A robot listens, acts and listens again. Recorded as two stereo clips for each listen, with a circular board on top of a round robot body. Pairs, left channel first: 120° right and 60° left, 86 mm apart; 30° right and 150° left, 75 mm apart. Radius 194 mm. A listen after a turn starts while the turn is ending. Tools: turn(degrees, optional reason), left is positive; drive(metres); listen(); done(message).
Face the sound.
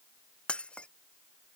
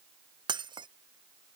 turn(degrees=160, reason="The breaking glass: 160° left.")
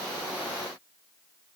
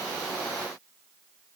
done("Facing where the breaking glass came from. I can't hear it now.")